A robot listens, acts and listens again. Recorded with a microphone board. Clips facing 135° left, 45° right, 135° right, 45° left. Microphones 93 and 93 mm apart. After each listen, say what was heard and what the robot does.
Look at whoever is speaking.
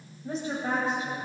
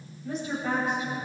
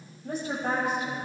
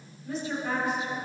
The woman speaking: 170° right. Turn 170° right.
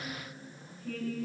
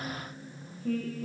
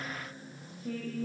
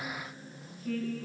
The woman speaking is now 65° right. Turn 65° right.
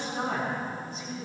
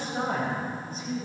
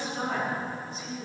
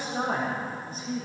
Found it: a woman speaking, straight ahead.